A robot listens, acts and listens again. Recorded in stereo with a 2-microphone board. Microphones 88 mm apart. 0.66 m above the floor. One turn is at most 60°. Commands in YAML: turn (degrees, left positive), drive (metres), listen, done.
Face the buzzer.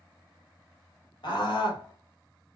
listen: true
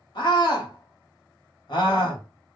listen: true
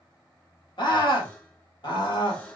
turn: 30
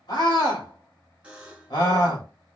turn: -15
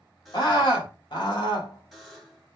done: "Facing the buzzer."